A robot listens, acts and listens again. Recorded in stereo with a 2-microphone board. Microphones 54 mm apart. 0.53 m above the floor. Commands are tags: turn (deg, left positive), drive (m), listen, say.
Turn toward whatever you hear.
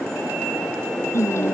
<turn deg="65"/>
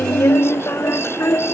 <turn deg="50"/>
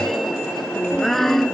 <say>Found it: singing, straight ahead.</say>